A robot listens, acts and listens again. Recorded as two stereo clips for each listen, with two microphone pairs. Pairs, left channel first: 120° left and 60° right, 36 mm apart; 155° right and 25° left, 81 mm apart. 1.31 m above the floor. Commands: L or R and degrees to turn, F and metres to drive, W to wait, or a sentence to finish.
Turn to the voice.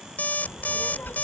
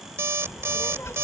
L150
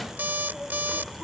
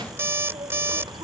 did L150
L35
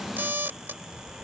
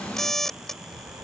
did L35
Found it: a child speaking, straight ahead.